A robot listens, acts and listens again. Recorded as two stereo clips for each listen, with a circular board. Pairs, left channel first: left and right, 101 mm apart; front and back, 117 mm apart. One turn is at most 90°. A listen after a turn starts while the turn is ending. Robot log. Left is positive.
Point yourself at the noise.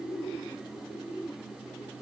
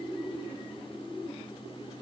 cmd idle
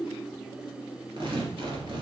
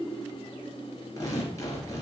note: The tearing paper: 60° right.
cmd yaw -60
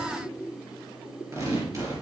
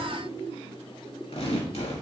note: The tearing paper is now 30° right.
cmd yaw -30
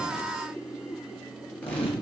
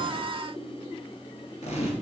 note: The tearing paper is now 15° left.
cmd yaw +15
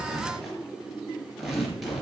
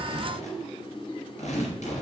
end: Found it: tearing paper, straight ahead.